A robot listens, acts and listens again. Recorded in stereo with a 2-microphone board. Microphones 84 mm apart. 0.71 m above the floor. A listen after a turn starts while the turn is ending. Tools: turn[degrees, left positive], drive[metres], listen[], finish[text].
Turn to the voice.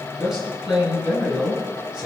Action: turn[-30]
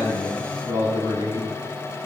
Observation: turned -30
Thought: So it is at 140° right.
Action: turn[-140]
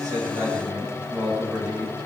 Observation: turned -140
Thought: The man speaking is now 15° right.
Action: turn[-15]
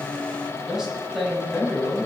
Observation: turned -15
Action: finish[Found it: a man speaking, straight ahead, over 4 m away.]